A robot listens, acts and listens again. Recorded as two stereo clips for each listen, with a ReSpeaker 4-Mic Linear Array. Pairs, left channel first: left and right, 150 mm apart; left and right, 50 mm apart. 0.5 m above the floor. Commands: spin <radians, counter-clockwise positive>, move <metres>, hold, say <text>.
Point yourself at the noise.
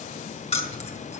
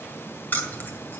spin 0.79
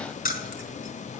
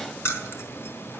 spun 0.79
spin 1.48
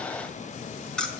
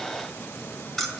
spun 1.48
say Facing the keys jangling.